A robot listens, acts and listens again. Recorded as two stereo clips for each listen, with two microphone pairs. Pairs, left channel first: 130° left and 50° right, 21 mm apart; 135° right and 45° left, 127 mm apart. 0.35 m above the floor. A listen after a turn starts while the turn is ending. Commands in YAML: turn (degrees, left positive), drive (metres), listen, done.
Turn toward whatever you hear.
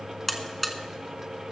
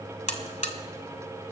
turn: -155
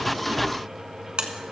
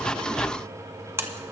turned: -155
turn: -25
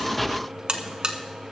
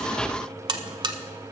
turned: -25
turn: -10
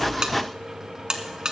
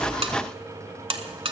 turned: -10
done: "Facing the buzzer."